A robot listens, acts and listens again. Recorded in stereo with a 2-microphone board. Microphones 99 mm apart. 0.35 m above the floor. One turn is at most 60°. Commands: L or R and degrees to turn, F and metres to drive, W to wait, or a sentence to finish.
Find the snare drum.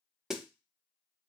R30
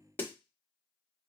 L25
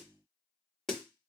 Found it: a snare drum, straight ahead.